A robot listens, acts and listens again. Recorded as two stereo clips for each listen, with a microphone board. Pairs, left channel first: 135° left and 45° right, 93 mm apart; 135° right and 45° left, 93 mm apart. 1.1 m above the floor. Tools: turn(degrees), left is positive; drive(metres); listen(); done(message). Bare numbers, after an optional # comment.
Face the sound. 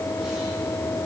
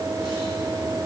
listen()
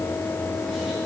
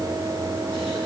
listen()
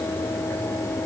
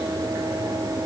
done("I can't make out anything to turn to.")